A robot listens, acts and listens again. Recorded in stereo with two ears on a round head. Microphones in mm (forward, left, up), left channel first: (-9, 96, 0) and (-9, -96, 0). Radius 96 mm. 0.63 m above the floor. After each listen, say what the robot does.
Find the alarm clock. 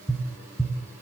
Keep listening.
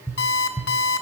Turn 55° left.
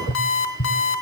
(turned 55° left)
Turn 70° left.
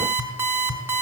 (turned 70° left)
Turn 10° right.
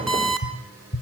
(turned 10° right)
Found it: an alarm clock, straight ahead.